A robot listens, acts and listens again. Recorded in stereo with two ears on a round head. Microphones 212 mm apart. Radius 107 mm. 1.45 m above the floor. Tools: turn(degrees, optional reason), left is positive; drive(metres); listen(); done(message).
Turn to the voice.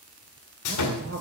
turn(degrees=-40, reason="The man speaking: about 40° right or 140° right.")
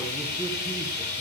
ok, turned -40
listen()
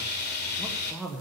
done("Facing the man speaking.")